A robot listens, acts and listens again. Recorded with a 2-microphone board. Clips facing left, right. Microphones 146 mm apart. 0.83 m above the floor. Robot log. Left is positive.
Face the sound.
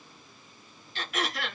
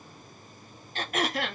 note: The throat clearing: about 45° right or 135° right.
cmd yaw -45
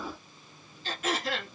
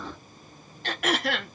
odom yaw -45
note: So it is at 85° right.
cmd yaw -85
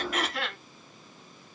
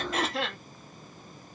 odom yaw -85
note: The throat clearing is now 30° right.
cmd yaw -30
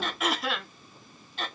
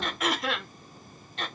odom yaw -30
end: Found it: throat clearing, straight ahead, 1 to 2 m away.